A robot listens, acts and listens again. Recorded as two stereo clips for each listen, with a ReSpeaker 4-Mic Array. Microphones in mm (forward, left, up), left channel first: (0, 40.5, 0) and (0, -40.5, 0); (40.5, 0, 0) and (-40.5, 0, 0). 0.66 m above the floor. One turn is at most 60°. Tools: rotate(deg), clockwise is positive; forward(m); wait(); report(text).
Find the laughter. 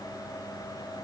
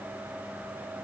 wait()
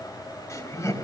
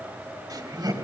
rotate(-60)
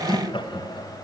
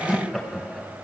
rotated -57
rotate(-60)
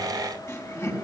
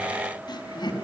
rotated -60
rotate(-35)
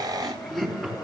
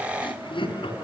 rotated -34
report("Found it: laughter, straight ahead.")